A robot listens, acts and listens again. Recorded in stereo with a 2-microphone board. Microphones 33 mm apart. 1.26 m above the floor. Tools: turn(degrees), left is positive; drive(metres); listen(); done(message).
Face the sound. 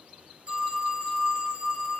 turn(degrees=-35)
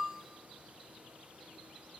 done("Found it: a phone ringing, straight ahead.")